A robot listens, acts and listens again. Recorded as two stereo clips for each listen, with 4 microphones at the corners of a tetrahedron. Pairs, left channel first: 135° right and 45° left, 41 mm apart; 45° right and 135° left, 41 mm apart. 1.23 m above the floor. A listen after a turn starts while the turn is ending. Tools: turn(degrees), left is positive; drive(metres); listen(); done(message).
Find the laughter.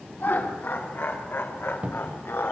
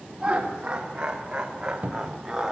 turn(degrees=-145)
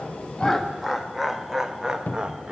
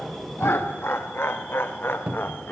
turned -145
turn(degrees=-15)
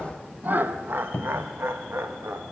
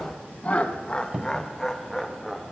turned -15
turn(degrees=45)
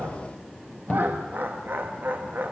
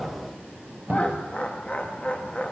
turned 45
turn(degrees=15)
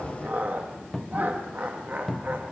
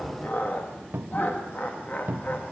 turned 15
done("Facing the laughter, 1 to 2 m away.")